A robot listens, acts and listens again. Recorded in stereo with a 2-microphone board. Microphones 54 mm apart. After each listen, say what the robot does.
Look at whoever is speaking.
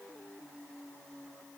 Keep listening.
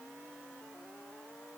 Keep listening.
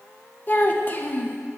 Turn 35° left.
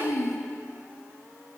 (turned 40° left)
Turn 105° left.
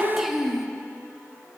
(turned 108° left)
Facing the child speaking, under 1 m away.